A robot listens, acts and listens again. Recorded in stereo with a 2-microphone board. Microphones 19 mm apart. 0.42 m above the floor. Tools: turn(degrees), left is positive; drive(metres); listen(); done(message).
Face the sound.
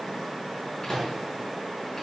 turn(degrees=20)
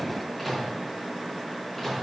done("Found it: a microwave, straight ahead.")